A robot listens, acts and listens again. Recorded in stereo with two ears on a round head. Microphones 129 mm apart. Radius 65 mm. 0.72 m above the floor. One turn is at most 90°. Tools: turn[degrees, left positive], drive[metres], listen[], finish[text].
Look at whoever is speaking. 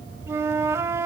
Action: listen[]
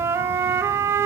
Action: listen[]
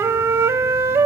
Action: finish[I can't make out anyone speaking to turn to.]